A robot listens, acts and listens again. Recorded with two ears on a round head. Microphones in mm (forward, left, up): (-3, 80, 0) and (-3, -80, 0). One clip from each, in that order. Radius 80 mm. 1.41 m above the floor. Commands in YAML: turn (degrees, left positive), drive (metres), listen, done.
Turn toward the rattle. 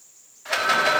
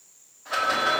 turn: 60
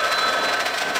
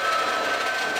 turn: 40
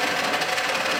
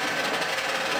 turn: 15
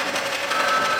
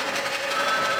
done: "Facing the rattle, 1 to 2 m away."